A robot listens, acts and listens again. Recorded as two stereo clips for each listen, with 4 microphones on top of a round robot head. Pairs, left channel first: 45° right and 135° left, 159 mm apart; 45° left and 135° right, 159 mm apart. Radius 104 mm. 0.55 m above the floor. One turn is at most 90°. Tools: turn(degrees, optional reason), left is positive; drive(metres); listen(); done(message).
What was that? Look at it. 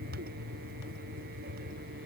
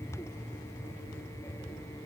listen()
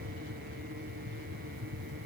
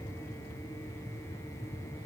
listen()
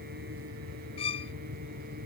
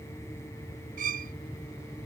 turn(degrees=-90, reason="The violin: 100° right.")
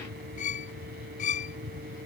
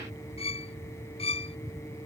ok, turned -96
done("Found it: a violin, straight ahead.")